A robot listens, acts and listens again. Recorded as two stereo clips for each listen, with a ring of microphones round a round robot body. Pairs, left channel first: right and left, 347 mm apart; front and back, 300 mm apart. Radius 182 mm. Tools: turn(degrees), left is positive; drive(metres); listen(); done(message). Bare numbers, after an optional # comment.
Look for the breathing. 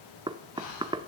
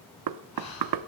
# The breathing: 50° right.
turn(-50)
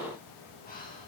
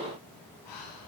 # The breathing is now 25° right.
turn(-25)
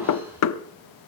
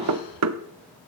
listen()
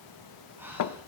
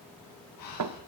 done("Found it: breathing, straight ahead, over 4 m away.")